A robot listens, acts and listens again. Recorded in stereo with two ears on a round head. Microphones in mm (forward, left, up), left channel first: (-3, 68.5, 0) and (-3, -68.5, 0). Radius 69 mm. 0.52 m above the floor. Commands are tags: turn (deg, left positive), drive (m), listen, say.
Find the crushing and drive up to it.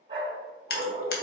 <turn deg="70"/>
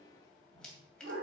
<listen/>
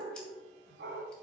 <listen/>
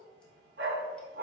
<say>I heard crushing, but can't make it out now. It was about straight ahead or 40° left. I did not reach it.</say>